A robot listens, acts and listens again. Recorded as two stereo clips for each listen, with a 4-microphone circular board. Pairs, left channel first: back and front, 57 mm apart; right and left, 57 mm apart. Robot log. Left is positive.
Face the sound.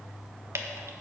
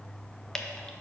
note: The dripping: 15° right.
cmd yaw -15
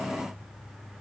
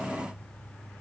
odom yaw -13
cmd idle
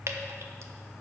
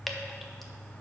end: Found it: dripping, straight ahead.